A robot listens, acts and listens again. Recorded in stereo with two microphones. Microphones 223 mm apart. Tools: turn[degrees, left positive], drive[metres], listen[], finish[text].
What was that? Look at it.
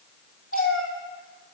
Action: turn[90]
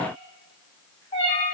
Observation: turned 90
Thought: So it is at 25° left.
Action: turn[25]
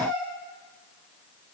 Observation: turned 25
Action: finish[Facing the cat meowing, over 4 m away.]